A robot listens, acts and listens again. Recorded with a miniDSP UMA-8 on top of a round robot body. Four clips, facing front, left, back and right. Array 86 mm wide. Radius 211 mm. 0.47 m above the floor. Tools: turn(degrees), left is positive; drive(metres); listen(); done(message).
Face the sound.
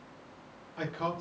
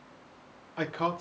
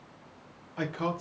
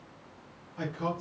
turn(degrees=105)
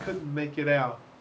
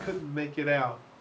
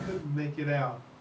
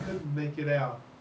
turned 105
turn(degrees=35)
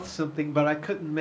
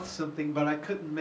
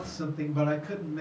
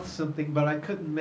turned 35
turn(degrees=-10)
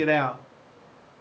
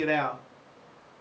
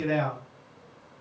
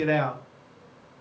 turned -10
done("Found it: a man speaking, straight ahead, 1 to 2 m away.")